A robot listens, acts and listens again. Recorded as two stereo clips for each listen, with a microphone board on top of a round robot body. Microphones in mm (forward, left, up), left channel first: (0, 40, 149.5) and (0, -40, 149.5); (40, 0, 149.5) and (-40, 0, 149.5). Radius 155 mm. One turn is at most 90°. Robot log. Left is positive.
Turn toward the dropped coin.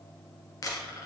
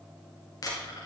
note: The dropped coin: 45° left.
cmd yaw +45
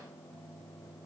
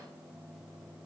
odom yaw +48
end: Facing where the dropped coin came from. I can't hear it now.